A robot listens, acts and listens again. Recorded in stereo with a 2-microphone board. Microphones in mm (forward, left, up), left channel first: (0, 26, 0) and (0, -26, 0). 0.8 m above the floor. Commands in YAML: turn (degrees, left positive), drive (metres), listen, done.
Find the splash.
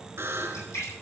turn: 90
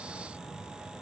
done: "Facing where the splash came from. I can't hear it now."